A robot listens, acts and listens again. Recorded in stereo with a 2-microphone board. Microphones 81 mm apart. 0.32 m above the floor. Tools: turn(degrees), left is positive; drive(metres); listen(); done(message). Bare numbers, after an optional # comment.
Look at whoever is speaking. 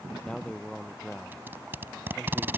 turn(30)
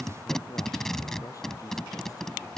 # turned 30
# So it is at 135° left.
turn(135)
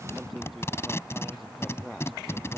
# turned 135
done("Found it: a man speaking, straight ahead.")